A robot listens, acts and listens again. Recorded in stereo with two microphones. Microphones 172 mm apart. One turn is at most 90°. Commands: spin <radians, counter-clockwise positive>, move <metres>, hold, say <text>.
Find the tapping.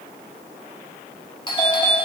hold
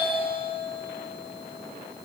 hold
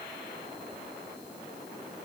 say I can't make out tapping, only a doorbell.